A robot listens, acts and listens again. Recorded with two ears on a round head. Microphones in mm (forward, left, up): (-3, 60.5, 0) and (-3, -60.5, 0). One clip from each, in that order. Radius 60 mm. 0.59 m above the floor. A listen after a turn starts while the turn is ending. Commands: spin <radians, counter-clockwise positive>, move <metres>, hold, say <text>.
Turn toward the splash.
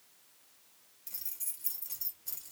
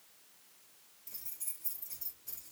hold
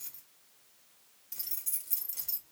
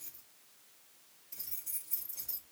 hold
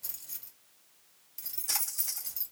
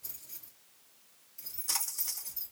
spin 0.52
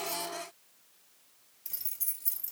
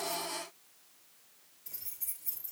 hold
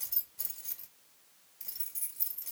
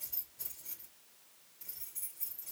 say I heard a splash, but can't make it out now. It was about 25° right or 145° left.